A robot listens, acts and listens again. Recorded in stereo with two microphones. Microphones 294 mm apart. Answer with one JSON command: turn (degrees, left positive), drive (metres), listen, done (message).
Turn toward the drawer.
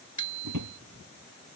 {"turn": -90}
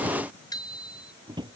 {"turn": -15}
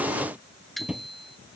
{"done": "Facing the drawer."}